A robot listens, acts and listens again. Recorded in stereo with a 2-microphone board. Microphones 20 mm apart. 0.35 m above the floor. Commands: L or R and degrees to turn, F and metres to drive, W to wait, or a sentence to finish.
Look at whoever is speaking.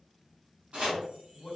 L25
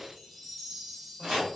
W
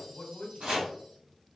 L125
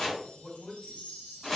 L35
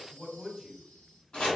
Facing the man speaking, 1 to 2 m away.